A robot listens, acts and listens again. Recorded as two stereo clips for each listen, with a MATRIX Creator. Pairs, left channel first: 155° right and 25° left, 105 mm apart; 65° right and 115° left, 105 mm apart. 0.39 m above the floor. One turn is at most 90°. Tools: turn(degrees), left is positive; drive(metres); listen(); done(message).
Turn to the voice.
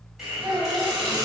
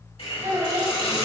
turn(degrees=85)
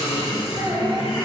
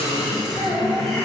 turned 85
turn(degrees=-10)
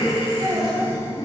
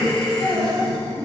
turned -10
done("Facing the child speaking.")